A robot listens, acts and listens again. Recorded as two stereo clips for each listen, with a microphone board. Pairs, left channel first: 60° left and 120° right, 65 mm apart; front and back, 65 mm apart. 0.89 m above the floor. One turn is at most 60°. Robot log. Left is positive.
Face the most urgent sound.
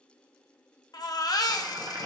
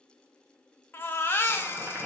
note: The baby crying: 55° left.
cmd yaw +55
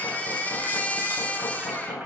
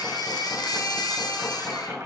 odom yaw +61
end: Found it: a baby crying, straight ahead.